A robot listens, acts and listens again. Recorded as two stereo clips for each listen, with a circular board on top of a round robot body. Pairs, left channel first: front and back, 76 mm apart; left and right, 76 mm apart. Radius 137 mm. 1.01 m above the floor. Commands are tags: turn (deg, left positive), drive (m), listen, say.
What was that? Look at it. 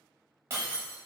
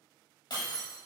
<turn deg="120"/>
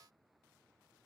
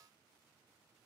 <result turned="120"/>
<say>Facing where the breaking glass came from. I can't hear it now.</say>